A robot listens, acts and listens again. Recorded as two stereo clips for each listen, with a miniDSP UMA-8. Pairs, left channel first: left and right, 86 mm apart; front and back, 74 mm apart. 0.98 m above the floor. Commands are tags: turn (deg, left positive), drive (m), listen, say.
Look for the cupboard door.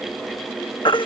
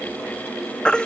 <listen/>
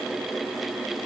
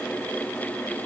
<listen/>
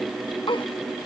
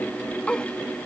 <say>I can't make out a cupboard door, only a baby crying.</say>